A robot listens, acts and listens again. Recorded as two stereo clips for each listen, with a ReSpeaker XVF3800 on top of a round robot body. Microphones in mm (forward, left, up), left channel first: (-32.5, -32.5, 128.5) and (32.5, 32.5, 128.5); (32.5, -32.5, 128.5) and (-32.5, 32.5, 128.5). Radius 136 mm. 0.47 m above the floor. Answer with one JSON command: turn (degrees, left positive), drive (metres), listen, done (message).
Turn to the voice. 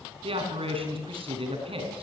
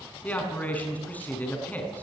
{"turn": 30}
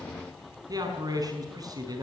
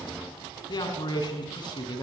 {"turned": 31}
{"done": "Found it: a man speaking, straight ahead."}